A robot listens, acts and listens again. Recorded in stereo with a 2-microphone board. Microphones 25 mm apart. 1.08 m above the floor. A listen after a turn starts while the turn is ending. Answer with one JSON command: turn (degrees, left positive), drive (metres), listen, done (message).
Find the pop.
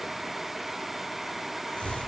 {"listen": true}
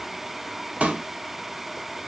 {"turn": -90}
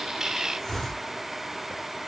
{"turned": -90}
{"done": "Facing where the pop came from. I can't hear it now."}